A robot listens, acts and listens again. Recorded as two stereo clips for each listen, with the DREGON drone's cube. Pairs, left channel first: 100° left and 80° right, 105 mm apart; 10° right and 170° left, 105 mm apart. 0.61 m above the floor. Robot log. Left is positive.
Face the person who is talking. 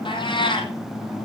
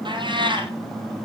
cmd idle
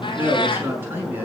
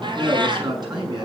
note: The man speaking: 150° right.
cmd yaw -150
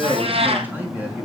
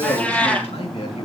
note: The man speaking is now 10° right.
cmd yaw -10
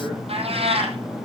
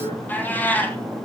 cmd idle
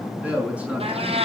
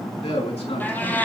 end: Facing the man speaking.